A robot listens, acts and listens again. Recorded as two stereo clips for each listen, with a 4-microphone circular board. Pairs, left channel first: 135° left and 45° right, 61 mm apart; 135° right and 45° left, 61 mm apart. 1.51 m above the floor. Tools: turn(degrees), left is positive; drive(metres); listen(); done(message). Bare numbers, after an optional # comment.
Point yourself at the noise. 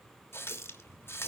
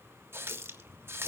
# The running tap: 90° left.
turn(90)
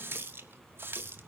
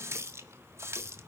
done("Facing the running tap.")